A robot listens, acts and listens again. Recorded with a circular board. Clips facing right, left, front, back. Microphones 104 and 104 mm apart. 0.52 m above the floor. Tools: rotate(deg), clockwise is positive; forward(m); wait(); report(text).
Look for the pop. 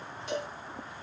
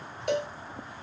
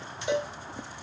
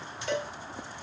wait()
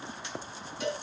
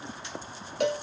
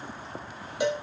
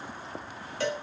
wait()
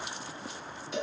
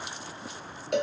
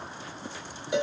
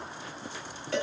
report("I can't make out a pop to turn to.")